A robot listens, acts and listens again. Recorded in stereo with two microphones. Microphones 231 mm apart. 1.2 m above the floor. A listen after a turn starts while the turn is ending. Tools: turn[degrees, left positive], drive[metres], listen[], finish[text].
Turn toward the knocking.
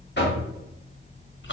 Thought: The knocking: about 50° left or 130° left.
Action: turn[50]
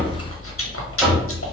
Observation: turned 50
Action: finish[Found it: knocking, straight ahead.]